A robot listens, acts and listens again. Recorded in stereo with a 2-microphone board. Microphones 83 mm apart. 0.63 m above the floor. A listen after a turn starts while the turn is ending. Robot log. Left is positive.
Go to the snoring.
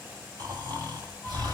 note: The snoring: about 50° right or 130° right.
cmd yaw -50
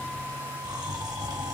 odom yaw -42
note: So it is at 75° right.
cmd yaw -75
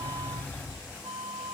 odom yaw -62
note: The snoring is now 10° right.
cmd yaw -10
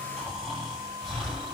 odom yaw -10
cmd fwd 1.0
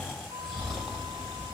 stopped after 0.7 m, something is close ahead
end: I am next to the snoring.